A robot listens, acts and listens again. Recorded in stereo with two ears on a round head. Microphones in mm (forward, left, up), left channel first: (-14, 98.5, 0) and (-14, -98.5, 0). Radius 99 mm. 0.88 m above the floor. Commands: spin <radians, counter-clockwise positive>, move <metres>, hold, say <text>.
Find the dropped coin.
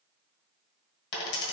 spin 0.87
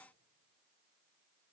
hold
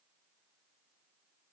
say I heard a dropped coin, but can't make it out now. It was about straight ahead or 80° left.